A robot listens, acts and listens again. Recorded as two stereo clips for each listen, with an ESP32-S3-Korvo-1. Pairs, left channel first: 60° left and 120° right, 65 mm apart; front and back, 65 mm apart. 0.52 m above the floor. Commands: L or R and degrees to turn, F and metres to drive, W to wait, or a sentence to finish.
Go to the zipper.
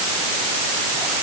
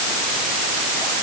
W
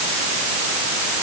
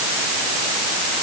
W
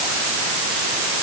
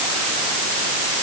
I can't make out a zipper to turn to.